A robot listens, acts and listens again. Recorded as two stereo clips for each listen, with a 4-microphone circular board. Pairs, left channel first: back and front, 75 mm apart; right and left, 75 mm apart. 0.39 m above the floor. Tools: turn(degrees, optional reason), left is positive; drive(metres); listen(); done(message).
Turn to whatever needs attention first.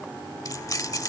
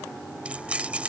listen()
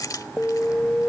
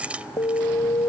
turn(degrees=-110, reason="The alarm: 110° right.")
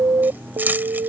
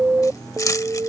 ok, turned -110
turn(degrees=30, reason="The alarm is now 30° left.")
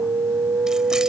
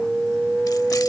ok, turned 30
turn(degrees=10, reason="The alarm is now 10° left.")
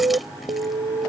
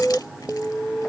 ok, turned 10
done("Found it: an alarm, straight ahead.")